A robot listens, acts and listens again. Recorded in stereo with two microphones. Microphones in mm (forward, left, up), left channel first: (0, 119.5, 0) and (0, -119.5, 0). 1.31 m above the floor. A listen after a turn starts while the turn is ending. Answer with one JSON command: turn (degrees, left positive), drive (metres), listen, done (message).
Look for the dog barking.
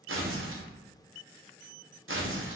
{"listen": true}
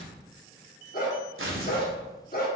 {"turn": 45}
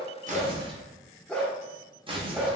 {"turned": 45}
{"done": "Found it: a dog barking, straight ahead, 1 to 2 m away."}